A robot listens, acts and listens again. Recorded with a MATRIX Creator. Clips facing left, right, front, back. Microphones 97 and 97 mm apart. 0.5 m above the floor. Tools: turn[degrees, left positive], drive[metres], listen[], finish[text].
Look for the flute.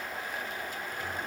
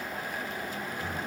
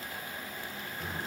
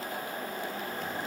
Action: listen[]
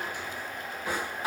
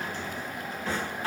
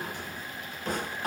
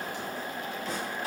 Action: listen[]
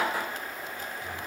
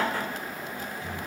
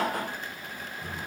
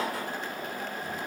Action: finish[I can't make out a flute, only a drawer.]